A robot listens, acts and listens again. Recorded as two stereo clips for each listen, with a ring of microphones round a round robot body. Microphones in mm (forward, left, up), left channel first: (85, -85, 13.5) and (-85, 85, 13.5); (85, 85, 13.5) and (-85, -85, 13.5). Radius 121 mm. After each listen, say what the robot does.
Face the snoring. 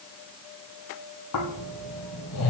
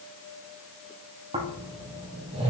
Turn 70° right.
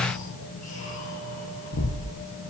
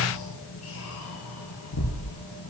Turn 15° left.
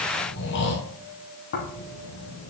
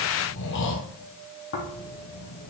Found it: snoring, straight ahead.